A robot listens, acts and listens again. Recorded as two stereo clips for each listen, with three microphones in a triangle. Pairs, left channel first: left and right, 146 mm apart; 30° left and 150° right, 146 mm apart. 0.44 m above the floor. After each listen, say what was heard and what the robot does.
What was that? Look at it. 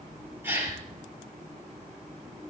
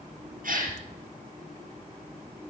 The gasp: 165° right. Turn 165° right.
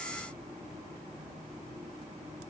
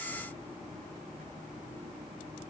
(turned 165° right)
Facing where the gasp came from. I can't hear it now.